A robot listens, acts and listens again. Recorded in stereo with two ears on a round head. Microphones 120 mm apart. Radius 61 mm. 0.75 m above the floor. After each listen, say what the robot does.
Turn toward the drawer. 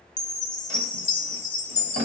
Turn 55° right.
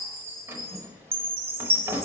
Turn 20° right.
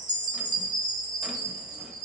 Keep listening.
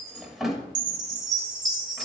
Found it: a drawer, straight ahead, under 1 m away.